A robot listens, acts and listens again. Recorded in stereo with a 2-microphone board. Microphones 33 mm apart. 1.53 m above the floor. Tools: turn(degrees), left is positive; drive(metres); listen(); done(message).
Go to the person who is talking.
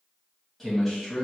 turn(degrees=30)
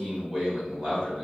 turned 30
turn(degrees=-30)
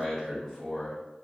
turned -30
turn(degrees=-15)
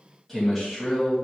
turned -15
drive(metres=1.0)
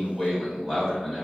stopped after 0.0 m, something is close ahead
turn(degrees=-10)
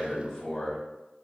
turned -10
done("Something is in my way. I am facing the man speaking but have not reached it.")